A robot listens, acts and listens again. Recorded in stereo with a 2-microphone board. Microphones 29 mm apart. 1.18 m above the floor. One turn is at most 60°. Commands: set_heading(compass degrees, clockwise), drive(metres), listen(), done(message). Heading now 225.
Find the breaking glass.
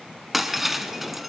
set_heading(255)
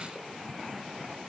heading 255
listen()
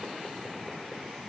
done("I heard breaking glass, but can't make it out now. It was about 25° left or 145° right.")